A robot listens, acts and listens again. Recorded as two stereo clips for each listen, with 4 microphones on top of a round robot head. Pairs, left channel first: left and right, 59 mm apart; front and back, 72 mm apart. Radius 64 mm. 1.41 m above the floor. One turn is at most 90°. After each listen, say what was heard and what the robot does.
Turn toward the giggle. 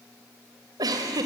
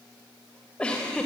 The giggle: 80° right. Turn 80° right.
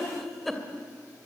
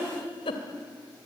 Found it: a giggle, straight ahead, 2 to 4 m away.